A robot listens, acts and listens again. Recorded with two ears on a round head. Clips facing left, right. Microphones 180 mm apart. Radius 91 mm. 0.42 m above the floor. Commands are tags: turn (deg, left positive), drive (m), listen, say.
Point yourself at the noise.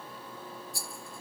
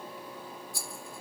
<turn deg="-55"/>
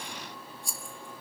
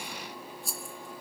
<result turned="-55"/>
<say>Facing the rattle, 1 to 2 m away.</say>